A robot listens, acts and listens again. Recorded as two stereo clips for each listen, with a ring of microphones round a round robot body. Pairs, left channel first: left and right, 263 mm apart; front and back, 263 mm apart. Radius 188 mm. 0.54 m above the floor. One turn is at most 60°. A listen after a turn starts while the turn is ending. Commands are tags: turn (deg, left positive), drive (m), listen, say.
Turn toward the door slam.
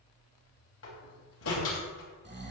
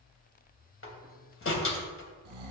<turn deg="35"/>
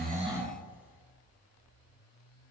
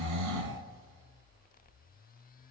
<say>I heard a door slam from this way, but can't make it out now.</say>